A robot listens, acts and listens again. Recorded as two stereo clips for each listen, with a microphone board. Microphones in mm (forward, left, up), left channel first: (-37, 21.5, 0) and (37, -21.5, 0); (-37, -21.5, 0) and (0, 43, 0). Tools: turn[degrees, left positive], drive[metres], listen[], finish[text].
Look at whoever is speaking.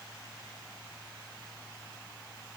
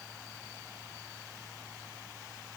Action: listen[]
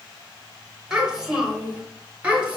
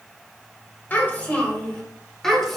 Thought: The child speaking: 35° right.
Action: turn[-35]
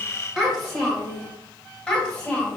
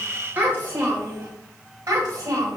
Thought: The child speaking is now 70° left.
Action: turn[70]
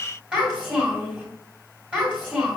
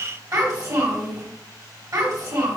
Thought: The child speaking is now 45° left.
Action: turn[45]
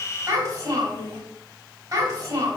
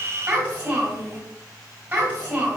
Action: finish[Facing the child speaking.]